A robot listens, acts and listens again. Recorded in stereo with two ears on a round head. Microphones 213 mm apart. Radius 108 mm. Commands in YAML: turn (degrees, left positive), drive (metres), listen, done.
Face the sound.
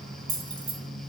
turn: -20
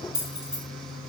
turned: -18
done: "Facing the keys jangling, 1 to 2 m away."